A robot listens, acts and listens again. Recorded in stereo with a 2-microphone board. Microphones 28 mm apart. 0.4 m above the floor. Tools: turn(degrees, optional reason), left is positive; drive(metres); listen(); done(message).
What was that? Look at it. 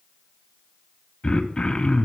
turn(degrees=30, reason="The throat clearing: about 30° left or 150° left.")
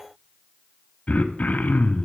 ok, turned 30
turn(degrees=115, reason="So it is at 115° left.")
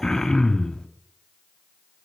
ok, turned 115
turn(degrees=25, reason="The throat clearing is now 25° left.")
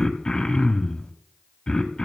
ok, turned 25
turn(degrees=30, reason="The throat clearing is now 30° left.")
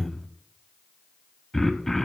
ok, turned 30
turn(degrees=15, reason="The throat clearing is now 15° left.")
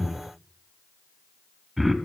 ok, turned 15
done("Facing the throat clearing, under 1 m away.")